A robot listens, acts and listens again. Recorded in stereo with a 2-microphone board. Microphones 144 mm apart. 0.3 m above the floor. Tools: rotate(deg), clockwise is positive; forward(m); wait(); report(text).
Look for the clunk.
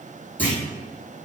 rotate(-30)
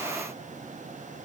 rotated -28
wait()
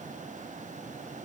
report("I heard a clunk, but can't make it out now. It was about 15° right or 140° left.")